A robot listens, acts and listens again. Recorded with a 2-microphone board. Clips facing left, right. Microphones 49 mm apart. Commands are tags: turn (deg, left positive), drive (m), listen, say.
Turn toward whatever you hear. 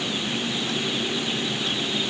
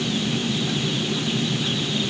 <listen/>
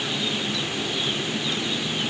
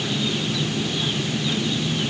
<listen/>
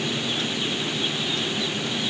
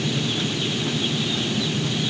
<say>I can't make out anything to turn to.</say>